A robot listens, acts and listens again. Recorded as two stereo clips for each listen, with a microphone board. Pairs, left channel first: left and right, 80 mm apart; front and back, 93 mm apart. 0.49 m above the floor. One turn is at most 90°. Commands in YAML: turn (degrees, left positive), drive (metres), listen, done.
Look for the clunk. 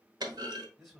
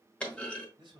turn: -75
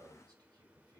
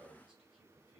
done: "I heard a clunk from this way, but can't make it out now."